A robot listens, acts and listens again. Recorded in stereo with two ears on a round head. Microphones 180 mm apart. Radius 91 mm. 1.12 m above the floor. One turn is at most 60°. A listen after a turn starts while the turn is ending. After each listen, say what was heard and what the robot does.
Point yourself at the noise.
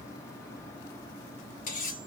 The cutlery clinking: about 40° left or 140° left. Turn 40° left.
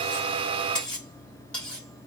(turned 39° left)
Facing the cutlery clinking.